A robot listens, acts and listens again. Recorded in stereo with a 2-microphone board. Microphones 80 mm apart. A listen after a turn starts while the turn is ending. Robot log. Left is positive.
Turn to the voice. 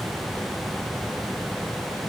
cmd idle
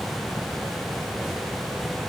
cmd idle
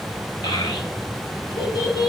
note: The child speaking: about 65° left or 115° left.
cmd yaw +65
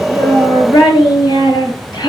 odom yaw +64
note: So it is at 55° left.
cmd yaw +55
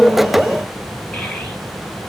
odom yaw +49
cmd idle
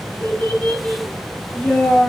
end: Found it: a child speaking, straight ahead.